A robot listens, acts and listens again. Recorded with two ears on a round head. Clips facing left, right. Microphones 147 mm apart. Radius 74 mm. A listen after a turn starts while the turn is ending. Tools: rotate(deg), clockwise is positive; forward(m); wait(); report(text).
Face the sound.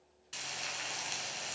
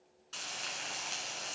rotate(-15)
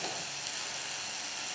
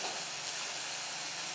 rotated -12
rotate(-150)
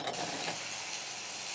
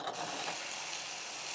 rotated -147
report("Facing the frying.")